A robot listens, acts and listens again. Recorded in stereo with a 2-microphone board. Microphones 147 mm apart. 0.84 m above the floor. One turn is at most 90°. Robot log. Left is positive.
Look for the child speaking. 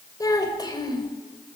note: The child speaking: about 25° left or 155° left.
cmd yaw +25
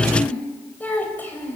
cmd yaw +30
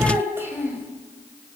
note: So it is at 15° right.
cmd yaw -15
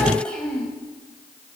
end: Found it: a child speaking, straight ahead.